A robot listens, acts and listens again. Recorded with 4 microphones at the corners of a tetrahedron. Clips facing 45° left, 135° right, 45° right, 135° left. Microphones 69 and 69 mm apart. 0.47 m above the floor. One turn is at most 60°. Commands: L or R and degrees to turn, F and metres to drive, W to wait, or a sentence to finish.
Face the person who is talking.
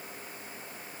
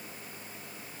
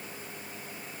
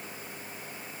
W
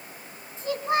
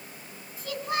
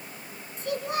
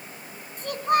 L60
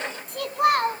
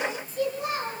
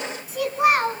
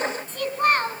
L35
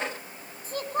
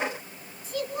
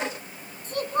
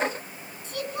Facing the child speaking.